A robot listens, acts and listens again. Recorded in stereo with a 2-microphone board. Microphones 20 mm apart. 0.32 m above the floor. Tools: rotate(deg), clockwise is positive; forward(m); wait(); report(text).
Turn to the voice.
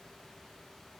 wait()
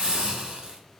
wait()
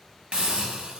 report("I can't make out anyone speaking, only a hiss.")